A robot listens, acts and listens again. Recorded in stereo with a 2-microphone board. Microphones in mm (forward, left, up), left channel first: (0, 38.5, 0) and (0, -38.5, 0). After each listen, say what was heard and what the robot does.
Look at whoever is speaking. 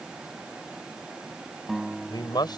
The man speaking: about 65° left or 115° left. Turn 65° left.
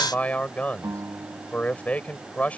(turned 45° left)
So it is at 20° left. Turn 20° left.
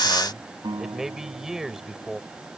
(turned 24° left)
Facing the man speaking.